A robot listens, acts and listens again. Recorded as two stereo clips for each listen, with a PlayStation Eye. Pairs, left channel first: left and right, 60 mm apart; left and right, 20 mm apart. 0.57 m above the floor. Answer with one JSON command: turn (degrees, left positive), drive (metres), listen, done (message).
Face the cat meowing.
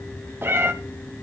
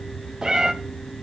{"turn": -40}
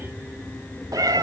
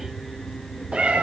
{"turn": -95}
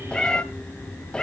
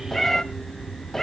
{"turn": 15}
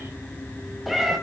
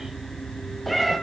{"done": "Found it: a cat meowing, straight ahead."}